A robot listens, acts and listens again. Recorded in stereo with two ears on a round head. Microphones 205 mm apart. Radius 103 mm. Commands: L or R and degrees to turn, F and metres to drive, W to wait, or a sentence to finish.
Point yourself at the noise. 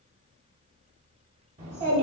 R35
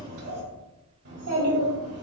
R110
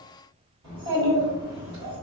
R20
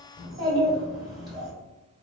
Facing the child speaking.